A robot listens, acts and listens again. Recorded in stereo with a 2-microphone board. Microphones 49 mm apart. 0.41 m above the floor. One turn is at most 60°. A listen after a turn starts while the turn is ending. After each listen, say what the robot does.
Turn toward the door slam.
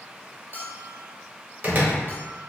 Turn 35° right.
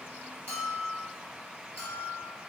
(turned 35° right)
Keep listening.
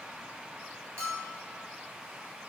I heard a door slam, but can't make it out now. It was about straight ahead or 110° right.